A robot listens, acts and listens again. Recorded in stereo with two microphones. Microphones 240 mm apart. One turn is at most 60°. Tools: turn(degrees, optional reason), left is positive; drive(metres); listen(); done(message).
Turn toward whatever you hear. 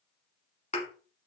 turn(degrees=30, reason="The thud: about 30° left or 150° left.")
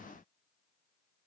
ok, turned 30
listen()
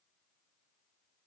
done("I heard a thud, but can't make it out now. It was about straight ahead or 120° left.")